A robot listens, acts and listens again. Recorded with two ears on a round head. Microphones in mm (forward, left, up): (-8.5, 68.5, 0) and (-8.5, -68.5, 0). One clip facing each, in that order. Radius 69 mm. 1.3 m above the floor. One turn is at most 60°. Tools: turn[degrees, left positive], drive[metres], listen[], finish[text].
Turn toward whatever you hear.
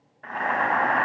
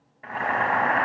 Action: turn[-30]
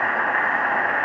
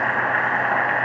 Thought: So it is at 145° right.
Action: turn[-60]
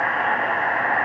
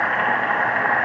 Thought: The boiling is now 85° right.
Action: turn[-60]
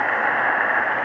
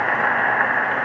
Thought: The boiling is now 40° right.
Action: turn[-40]
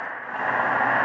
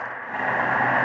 Thought: The boiling is now 10° right.
Action: turn[-10]
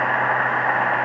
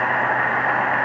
Action: finish[Facing the boiling.]